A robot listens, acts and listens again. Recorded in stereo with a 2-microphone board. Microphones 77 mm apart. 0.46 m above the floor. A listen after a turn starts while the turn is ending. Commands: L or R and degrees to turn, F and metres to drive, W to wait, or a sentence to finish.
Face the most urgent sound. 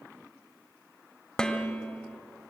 W
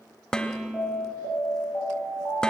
L30
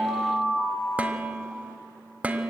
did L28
L120
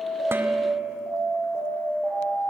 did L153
R35
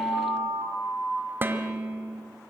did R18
R15
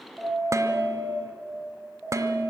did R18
Found it: an alarm, straight ahead.